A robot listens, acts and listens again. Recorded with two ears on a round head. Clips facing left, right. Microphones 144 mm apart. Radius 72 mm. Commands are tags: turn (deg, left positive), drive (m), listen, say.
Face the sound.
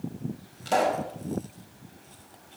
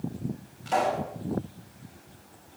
<turn deg="45"/>
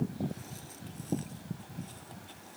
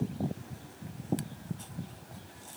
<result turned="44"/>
<listen/>
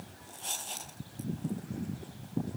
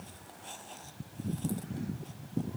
<say>I heard a pop, but can't make it out now. It was about straight ahead or 90° left.</say>